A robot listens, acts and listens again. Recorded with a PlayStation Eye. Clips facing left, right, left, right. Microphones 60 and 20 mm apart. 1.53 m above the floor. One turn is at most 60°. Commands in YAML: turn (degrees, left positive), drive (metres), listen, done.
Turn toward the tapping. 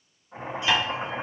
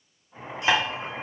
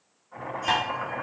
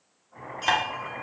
turn: -30
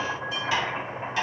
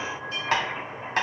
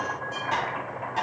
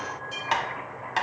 turn: -60
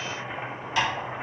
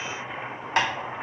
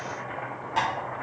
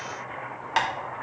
turn: -60
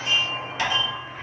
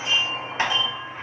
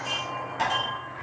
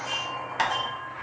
turn: -40
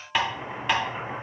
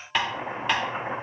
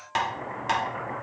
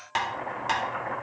done: "Facing the tapping."